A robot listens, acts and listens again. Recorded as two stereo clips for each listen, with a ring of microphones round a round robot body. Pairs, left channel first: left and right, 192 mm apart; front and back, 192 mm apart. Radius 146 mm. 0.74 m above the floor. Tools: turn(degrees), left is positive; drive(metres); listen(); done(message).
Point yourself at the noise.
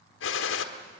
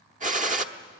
turn(degrees=130)
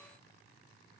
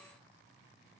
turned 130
done("I heard a gunshot from this way, but can't make it out now.")